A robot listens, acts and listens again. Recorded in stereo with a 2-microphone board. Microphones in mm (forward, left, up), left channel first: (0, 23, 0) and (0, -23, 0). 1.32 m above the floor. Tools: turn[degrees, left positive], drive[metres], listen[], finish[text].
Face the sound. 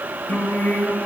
Thought: The singing: about 50° left or 130° left.
Action: turn[50]
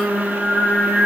Thought: So it is at 10° left.
Action: turn[10]
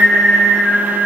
Action: finish[Facing the singing.]